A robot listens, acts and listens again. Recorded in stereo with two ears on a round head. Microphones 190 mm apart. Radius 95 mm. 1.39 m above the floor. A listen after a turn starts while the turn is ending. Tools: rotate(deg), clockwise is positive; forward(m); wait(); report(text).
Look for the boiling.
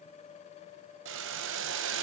rotate(60)
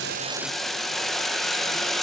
report("Facing the boiling, under 1 m away.")